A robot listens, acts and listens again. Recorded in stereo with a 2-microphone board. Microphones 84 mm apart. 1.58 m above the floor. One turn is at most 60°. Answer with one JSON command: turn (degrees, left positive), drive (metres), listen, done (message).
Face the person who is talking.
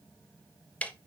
{"listen": true}
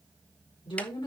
{"turn": 60}
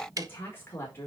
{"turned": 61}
{"turn": 30}
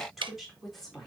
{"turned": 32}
{"done": "Found it: a woman speaking, straight ahead, 2 to 4 m away."}